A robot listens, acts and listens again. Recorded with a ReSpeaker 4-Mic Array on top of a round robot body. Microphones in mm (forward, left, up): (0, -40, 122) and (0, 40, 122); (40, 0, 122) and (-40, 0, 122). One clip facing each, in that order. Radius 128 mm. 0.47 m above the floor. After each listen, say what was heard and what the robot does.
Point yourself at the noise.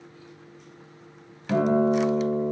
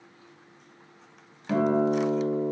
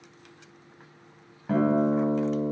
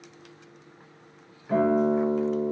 The guitar: 10° left. Turn 10° left.
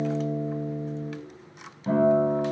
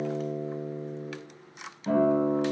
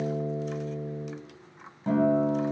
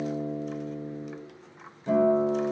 Found it: a guitar, straight ahead.